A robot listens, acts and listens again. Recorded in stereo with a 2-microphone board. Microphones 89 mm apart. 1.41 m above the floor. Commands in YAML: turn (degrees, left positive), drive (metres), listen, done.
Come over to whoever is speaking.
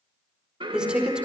turn: -30
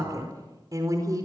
turn: -135
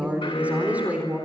turn: -15
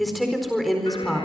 drive: 1.0
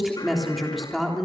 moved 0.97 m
drive: 1.0
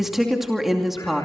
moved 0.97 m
drive: 1.0
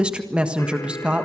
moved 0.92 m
turn: -10
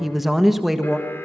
drive: 1.0
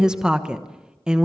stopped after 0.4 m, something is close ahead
turn: -10
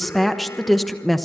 done: "Arrived at the woman speaking, straight ahead."